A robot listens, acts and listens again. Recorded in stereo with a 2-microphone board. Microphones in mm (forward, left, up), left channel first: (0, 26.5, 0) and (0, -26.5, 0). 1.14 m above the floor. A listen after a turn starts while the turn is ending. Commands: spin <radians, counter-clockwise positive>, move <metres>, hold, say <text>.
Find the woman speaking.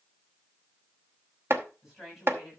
spin -0.52
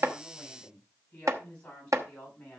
spin 0.35
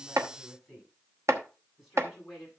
say Facing the woman speaking, over 4 m away.